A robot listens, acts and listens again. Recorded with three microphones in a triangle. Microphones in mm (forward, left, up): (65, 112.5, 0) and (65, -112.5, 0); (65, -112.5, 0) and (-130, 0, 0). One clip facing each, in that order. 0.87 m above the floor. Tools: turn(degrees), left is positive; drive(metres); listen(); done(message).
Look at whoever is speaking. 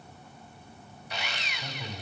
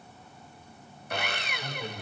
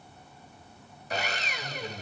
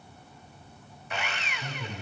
turn(degrees=165)
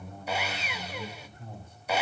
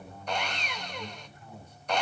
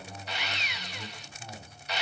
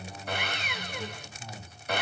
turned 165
turn(degrees=50)
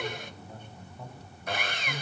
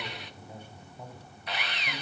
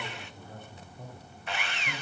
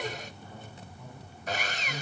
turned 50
turn(degrees=-10)
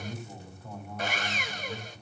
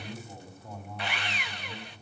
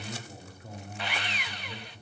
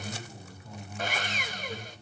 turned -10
done("Found it: a man speaking, straight ahead.")